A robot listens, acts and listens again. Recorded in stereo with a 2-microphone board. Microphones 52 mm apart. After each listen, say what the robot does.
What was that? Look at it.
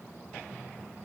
Keep listening.
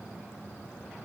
Keep listening.
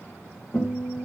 Turn 40° left.
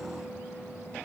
Keep listening.
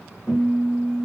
Facing the guitar.